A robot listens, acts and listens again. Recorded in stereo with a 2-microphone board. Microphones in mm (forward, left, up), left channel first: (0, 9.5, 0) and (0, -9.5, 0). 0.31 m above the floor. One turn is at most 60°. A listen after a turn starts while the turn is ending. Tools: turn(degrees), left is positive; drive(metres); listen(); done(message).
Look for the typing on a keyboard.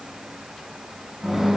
listen()
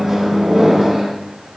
listen()
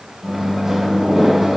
done("I can't make out typing on a keyboard to turn to.")